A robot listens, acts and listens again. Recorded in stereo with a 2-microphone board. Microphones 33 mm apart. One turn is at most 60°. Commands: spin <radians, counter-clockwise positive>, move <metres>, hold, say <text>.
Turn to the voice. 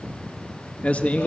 spin 0.70
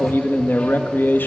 spin 1.05
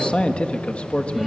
spin 0.61
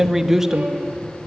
spin -0.17
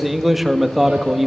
say Found it: a man speaking, straight ahead, 1 to 2 m away.